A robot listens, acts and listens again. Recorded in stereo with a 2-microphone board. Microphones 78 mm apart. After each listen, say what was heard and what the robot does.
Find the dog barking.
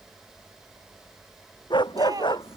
Turn 90° left.
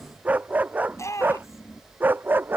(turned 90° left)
So it is at 25° right. Turn 25° right.
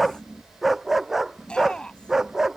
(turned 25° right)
Found it: a dog barking, straight ahead.